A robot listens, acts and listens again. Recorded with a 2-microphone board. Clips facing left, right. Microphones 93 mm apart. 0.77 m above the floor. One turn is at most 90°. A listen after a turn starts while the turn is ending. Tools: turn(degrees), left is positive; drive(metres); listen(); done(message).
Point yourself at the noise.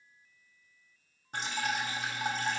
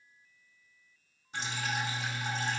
turn(degrees=55)
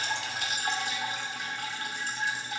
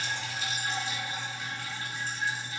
turn(degrees=70)
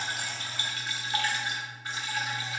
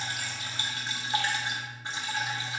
turn(degrees=-25)
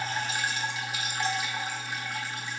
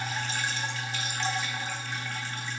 turn(degrees=10)
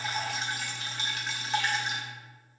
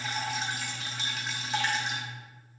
done("Found it: dripping, straight ahead.")